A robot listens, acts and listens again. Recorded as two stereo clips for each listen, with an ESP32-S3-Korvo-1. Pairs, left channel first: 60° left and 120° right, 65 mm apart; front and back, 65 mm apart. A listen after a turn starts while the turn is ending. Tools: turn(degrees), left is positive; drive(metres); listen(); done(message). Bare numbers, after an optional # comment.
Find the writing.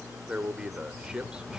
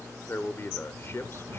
# The writing: 150° left.
turn(150)
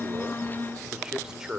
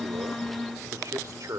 listen()
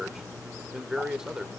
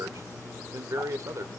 listen()
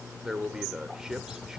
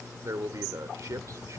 done("Facing the writing.")